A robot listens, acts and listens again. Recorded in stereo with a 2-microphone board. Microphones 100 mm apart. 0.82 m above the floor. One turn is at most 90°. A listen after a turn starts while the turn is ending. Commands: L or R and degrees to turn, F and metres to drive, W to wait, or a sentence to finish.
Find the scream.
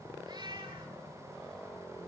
W
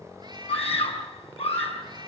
L90
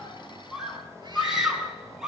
Facing the scream, over 4 m away.